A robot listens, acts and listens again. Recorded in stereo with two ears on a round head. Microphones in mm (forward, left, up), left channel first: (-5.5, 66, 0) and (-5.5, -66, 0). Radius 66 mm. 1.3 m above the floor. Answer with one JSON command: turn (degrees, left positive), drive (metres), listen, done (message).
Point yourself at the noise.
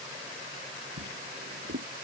{"turn": -90}
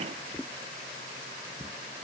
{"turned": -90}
{"turn": 10}
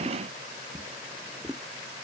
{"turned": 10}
{"done": "Facing the drawer."}